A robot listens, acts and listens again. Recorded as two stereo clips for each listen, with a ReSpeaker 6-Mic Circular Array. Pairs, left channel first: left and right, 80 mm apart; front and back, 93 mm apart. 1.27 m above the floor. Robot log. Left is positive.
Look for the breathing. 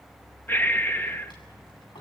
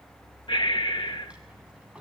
note: The breathing: 25° left.
cmd yaw +25
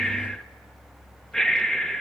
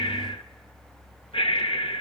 note: The breathing is now 10° left.
cmd yaw +10
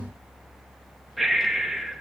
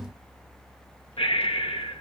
end: Facing the breathing.